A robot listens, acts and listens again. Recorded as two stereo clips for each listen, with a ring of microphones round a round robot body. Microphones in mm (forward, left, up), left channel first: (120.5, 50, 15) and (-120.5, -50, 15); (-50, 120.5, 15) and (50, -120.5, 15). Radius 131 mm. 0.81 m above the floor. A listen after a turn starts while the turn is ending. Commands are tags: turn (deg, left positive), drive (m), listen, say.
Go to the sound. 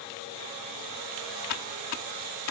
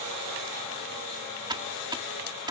<drive m="1.0"/>
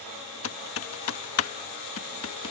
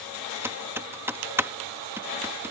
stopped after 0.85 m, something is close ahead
<turn deg="10"/>
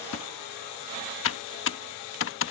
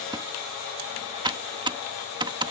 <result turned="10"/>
<say>I am next to the typing on a keyboard.</say>